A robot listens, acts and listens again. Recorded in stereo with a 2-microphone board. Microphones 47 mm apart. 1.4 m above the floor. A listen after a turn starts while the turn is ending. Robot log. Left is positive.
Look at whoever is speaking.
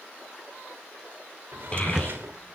note: The child speaking: about 20° left or 160° left.
cmd yaw +20
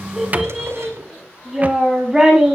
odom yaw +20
note: So it is at 10° right.
cmd yaw -10
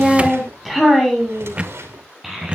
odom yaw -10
end: Found it: a child speaking, straight ahead, over 4 m away.